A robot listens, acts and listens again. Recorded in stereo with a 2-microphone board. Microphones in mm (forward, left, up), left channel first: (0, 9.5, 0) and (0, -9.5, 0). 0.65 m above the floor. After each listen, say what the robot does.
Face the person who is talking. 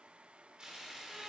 Keep listening.
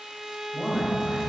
Turn 25° right.
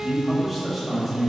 Turn 10° right.
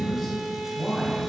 Found it: a man speaking, straight ahead, over 4 m away.